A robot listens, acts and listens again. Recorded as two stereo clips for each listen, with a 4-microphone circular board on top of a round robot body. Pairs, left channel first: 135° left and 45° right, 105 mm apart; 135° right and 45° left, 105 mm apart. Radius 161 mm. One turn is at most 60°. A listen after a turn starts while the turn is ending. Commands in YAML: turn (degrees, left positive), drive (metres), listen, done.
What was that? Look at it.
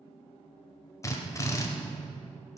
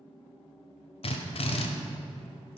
turn: -60
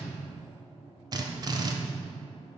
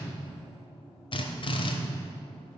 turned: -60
turn: -60
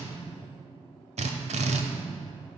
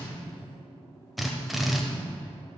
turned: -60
turn: -45
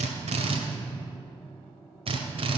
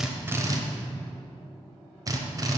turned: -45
turn: -10
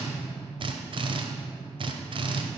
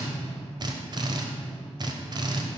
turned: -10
done: "Facing the drill, 1 to 2 m away."